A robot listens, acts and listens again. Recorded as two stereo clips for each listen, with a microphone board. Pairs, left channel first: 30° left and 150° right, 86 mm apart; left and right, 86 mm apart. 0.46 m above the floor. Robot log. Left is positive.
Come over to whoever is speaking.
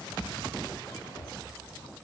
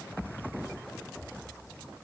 cmd idle
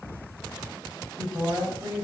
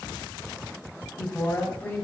note: The woman speaking: 155° left.
cmd yaw +155
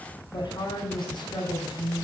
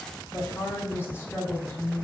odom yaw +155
note: The woman speaking is now 30° left.
cmd yaw +30
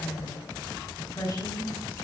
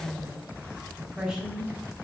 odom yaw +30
note: The woman speaking is now 10° right.
cmd yaw -10
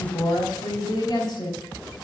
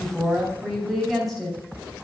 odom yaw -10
cmd fwd 1.0
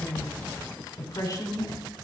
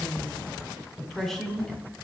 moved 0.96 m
cmd fwd 1.0
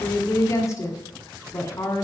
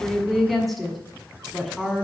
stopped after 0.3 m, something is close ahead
end: Arrived at the woman speaking, straight ahead.